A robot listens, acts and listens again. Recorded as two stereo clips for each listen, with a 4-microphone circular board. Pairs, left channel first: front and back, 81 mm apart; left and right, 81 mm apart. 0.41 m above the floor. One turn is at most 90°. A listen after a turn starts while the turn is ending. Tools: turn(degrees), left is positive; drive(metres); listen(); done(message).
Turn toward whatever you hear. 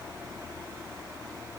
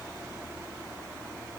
listen()
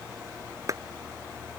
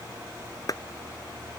turn(degrees=90)
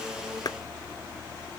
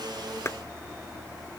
turn(degrees=40)
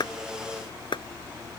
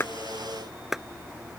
done("Found it: a clap, straight ahead.")